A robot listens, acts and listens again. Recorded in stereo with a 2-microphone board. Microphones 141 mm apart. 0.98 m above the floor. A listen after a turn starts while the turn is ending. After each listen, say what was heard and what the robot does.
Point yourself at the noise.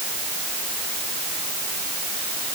Keep listening.
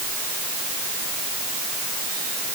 Keep listening.
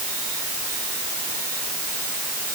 I can't make out anything.